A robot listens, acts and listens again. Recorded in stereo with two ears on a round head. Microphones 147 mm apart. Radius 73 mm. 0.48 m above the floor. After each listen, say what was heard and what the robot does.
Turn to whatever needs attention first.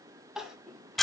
Turn 30° right.
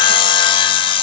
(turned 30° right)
Keep listening.
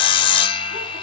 Keep listening.
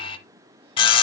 I heard crying, but can't make it out now. It was about 25° left or 145° right.